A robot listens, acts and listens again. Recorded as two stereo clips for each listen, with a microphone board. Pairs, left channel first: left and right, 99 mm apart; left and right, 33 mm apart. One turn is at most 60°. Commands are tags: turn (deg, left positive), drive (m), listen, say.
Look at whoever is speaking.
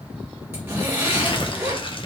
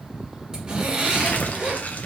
<listen/>
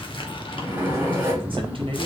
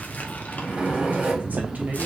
<turn deg="-60"/>
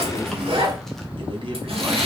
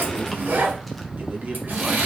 <turn deg="-60"/>
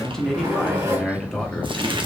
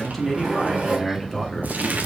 <say>Facing the man speaking.</say>